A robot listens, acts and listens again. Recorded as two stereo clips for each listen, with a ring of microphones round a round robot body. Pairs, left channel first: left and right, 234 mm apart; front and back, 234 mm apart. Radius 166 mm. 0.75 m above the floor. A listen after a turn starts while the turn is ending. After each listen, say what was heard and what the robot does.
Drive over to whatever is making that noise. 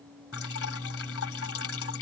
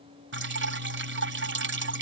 The dripping: 145° left. Turn 145° left.
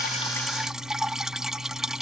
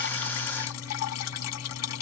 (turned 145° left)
Drive 1.0 m forward.
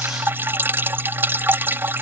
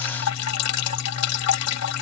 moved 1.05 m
The dripping is now 10° right. Turn 10° right.
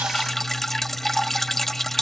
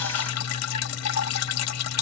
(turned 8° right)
Drive 1.0 m forward.
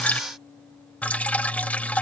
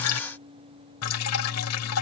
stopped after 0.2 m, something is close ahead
Arrived at the dripping, straight ahead.